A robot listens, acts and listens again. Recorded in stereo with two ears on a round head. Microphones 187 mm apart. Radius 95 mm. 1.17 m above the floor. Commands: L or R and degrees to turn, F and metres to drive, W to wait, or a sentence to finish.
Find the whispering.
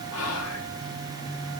L75
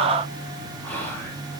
L10
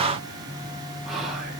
Facing the whispering.